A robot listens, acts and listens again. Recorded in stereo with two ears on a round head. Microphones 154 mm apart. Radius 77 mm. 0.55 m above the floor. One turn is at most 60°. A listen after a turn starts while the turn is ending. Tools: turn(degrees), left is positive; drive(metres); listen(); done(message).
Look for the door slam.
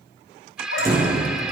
turn(degrees=-20)
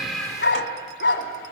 listen()
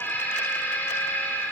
done("I heard a door slam, but can't make it out now. It was about straight ahead or 140° right.")